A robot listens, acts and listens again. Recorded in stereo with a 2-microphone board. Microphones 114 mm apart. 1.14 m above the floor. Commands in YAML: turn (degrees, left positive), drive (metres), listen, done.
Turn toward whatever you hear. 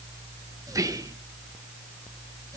turn: -30
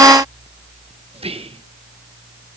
turn: -120
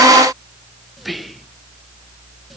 done: "Found it: whispering, straight ahead, under 1 m away."